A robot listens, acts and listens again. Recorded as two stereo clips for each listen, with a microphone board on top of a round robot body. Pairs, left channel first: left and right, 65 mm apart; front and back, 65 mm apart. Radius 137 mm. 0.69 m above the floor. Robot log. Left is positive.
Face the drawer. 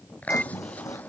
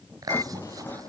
note: The drawer: 60° left.
cmd yaw +60
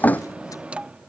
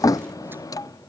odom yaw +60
note: The drawer is now 25° left.
cmd yaw +25
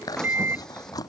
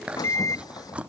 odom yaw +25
note: The drawer is now 10° left.
cmd yaw +10
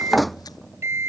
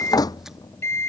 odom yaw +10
end: Facing the drawer.